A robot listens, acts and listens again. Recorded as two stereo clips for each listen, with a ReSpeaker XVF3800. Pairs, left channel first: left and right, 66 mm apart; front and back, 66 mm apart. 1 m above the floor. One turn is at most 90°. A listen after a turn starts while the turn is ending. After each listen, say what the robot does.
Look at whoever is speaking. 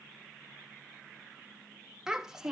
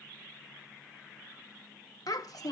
Turn 10° right.
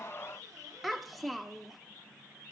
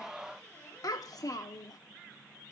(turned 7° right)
Facing the child speaking.